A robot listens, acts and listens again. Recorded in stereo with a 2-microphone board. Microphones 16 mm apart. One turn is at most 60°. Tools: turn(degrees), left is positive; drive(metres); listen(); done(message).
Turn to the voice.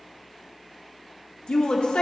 turn(degrees=60)
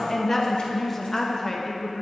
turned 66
turn(degrees=10)
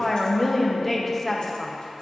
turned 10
done("Found it: a woman speaking, straight ahead, under 1 m away.")